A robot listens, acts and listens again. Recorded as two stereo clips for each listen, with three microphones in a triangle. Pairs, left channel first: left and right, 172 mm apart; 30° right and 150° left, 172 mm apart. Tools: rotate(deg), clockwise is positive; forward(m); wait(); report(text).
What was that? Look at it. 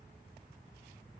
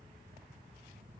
wait()
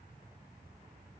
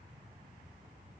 wait()
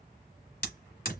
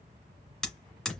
rotate(-55)
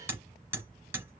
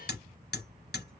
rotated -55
rotate(10)
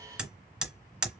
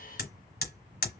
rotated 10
report("Facing the hammering.")